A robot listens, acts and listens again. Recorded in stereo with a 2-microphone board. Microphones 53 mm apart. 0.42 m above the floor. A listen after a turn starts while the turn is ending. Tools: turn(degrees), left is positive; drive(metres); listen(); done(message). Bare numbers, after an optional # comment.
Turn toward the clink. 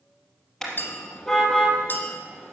# The clink: about 40° left or 140° left.
turn(40)
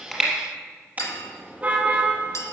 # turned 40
# So it is at 100° left.
turn(100)
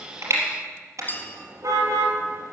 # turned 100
# The clink is now 40° left.
turn(40)
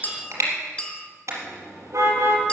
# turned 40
# The clink is now 20° left.
turn(20)
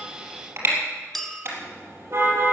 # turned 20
done("Found it: a clink, straight ahead.")